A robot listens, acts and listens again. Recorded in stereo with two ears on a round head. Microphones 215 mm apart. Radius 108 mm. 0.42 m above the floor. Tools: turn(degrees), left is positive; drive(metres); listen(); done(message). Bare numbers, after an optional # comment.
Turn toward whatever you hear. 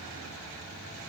listen()
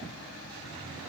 listen()
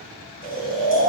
# The snoring: about 40° right or 140° right.
turn(-40)
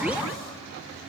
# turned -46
listen()
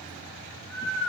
done("Facing the snoring.")